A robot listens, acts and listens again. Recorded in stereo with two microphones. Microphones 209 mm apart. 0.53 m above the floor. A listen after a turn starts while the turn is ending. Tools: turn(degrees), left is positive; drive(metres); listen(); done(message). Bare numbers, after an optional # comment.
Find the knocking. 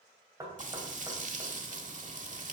# The knocking: about 15° right or 165° right.
turn(-15)
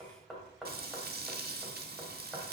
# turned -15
done("Found it: knocking, straight ahead.")